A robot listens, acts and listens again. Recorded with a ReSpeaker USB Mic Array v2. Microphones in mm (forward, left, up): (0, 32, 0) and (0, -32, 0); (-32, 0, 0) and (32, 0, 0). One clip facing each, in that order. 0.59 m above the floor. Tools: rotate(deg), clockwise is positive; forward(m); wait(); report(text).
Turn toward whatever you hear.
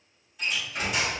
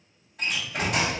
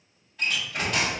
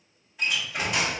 rotate(75)
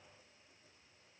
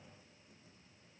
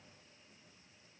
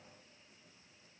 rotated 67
rotate(10)
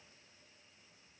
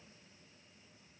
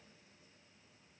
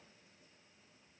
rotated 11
report("I heard a door slam from this way, but can't make it out now.")